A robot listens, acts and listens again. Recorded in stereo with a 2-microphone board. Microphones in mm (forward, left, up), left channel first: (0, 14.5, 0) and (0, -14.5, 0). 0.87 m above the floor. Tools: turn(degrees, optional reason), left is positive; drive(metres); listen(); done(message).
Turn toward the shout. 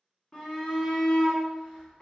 turn(degrees=30, reason="The shout: about 30° left or 150° left.")
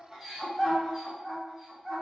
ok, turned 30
done("Found it: a shout, straight ahead.")